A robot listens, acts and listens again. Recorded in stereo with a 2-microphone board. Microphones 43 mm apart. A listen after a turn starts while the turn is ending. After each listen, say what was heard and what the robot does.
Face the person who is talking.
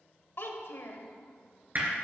The child speaking: about 60° left or 120° left. Turn 60° left.
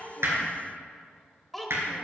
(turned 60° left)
Facing the child speaking, under 1 m away.